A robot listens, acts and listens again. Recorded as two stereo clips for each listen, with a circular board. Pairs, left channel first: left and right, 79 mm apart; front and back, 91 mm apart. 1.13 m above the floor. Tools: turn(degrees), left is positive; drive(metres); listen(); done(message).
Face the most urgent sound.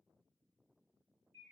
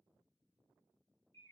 listen()
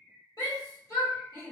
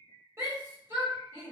turn(degrees=125)
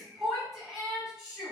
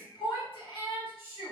done("Facing the shout, 1 to 2 m away.")